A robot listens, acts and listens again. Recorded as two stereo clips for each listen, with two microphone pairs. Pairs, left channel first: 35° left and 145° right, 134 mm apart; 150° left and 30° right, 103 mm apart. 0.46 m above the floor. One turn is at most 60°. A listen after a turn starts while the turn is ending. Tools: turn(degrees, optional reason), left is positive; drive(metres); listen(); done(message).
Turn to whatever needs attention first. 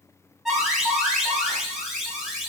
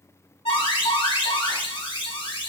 turn(degrees=60, reason="The alarm: 125° left.")
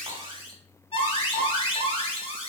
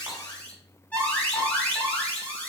turn(degrees=60, reason="The alarm is now 75° left.")
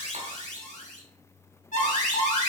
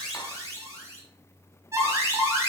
turn(degrees=30, reason="The alarm is now 30° left.")
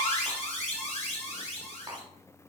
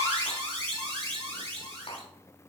done("Facing the alarm, 2 to 4 m away.")